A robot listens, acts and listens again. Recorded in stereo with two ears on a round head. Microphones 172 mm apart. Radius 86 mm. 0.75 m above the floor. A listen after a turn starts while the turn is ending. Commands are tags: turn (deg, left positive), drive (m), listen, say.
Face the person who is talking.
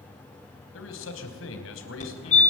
<turn deg="90"/>
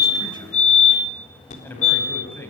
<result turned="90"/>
<turn deg="10"/>
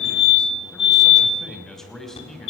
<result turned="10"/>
<say>Facing the man speaking.</say>